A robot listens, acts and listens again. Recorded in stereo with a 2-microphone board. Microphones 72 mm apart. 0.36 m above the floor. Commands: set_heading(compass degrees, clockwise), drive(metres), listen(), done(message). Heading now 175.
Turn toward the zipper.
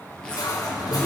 set_heading(145)
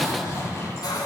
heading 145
set_heading(5)
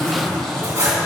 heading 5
done("Found it: a zipper, straight ahead.")